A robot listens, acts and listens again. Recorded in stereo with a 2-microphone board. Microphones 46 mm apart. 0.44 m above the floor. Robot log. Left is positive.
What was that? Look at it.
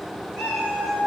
cmd yaw -30
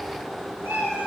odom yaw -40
note: So it is at 115° right.
cmd yaw -115
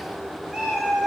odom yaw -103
end: Found it: a cat meowing, straight ahead, 2 to 4 m away.